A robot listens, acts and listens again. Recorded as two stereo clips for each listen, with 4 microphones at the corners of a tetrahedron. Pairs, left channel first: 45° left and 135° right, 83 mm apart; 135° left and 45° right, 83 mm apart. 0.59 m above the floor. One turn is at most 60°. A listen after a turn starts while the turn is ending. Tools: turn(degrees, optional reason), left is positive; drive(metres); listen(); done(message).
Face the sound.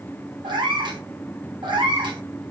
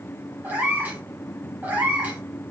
turn(degrees=-60, reason="The cat meowing: 115° right.")
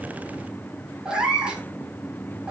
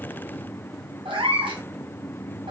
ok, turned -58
turn(degrees=-55, reason="The cat meowing is now 55° right.")
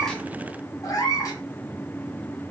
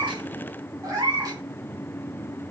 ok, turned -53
done("Found it: a cat meowing, straight ahead.")